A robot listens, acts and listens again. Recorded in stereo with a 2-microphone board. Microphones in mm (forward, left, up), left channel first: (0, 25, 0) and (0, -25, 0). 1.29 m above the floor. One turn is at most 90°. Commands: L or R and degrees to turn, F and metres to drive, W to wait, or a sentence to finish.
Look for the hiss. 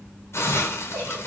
L60
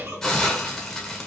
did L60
L10
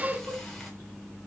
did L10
W
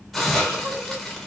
Facing the hiss.